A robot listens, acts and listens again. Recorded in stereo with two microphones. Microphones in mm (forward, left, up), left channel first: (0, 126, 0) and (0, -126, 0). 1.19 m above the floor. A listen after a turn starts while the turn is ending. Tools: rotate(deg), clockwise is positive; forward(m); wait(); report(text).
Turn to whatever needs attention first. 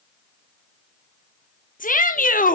rotate(-35)
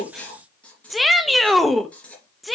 report("Facing the shout.")